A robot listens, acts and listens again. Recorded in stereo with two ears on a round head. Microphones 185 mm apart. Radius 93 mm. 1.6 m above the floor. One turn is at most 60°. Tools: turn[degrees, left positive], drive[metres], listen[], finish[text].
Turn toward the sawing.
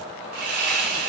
Thought: The sawing: about 45° right or 135° right.
Action: turn[-45]
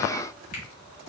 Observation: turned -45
Action: listen[]
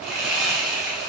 Action: finish[Found it: sawing, straight ahead, 1 to 2 m away.]